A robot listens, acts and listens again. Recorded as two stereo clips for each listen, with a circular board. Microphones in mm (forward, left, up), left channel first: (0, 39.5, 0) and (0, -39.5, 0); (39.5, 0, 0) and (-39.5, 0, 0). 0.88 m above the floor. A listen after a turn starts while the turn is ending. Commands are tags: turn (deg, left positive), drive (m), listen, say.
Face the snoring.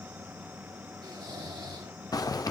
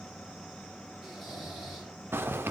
<turn deg="-90"/>
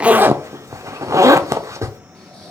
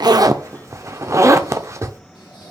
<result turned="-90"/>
<turn deg="10"/>
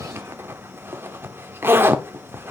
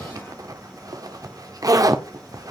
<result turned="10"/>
<listen/>
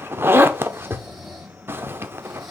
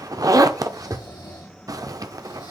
<say>Found it: snoring, straight ahead, over 4 m away.</say>